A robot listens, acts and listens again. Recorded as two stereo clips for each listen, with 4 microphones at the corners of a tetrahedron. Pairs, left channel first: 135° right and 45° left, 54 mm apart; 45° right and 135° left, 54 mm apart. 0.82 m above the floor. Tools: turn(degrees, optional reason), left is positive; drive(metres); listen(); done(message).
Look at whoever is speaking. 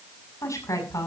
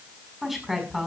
turn(degrees=-135, reason="The woman speaking: 135° right.")
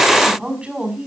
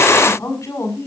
turn(degrees=-25, reason="The woman speaking is now 25° right.")
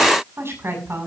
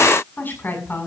done("Found it: a woman speaking, straight ahead, over 4 m away.")